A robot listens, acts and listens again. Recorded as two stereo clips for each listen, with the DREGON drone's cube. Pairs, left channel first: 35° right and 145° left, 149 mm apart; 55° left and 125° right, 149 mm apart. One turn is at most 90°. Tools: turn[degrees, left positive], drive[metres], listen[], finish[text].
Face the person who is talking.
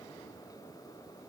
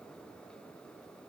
Action: listen[]
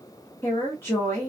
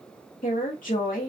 Thought: The woman speaking: 40° left.
Action: turn[40]
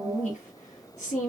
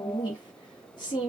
Action: finish[Facing the woman speaking, 1 to 2 m away.]